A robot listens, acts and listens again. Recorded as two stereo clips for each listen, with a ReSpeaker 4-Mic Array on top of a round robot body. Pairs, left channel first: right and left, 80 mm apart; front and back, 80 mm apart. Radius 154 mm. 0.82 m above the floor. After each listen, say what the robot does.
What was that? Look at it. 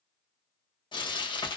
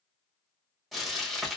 Turn 90° right.
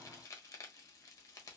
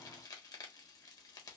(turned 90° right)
Turn 40° right.
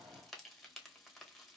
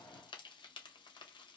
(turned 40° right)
Found it: frying, straight ahead, 1 to 2 m away.